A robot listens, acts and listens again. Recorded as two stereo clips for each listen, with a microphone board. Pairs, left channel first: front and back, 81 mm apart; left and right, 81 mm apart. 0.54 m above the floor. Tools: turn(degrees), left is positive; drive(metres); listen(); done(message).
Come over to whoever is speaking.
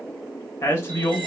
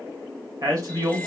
turn(degrees=-50)
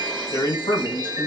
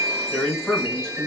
drive(metres=1.0)
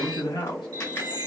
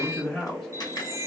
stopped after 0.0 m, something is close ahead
done("Blocked. The man speaking is further on, straight ahead.")